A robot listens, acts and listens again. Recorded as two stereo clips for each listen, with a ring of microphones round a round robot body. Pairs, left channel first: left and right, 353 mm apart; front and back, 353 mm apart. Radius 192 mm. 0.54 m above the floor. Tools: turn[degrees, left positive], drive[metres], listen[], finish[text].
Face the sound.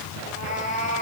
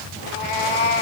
Thought: The cat meowing: 15° left.
Action: turn[15]
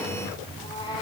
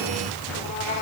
Action: listen[]
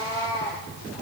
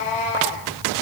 Thought: The cat meowing is now 10° left.
Action: turn[10]
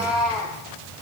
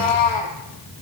Action: finish[Facing the cat meowing.]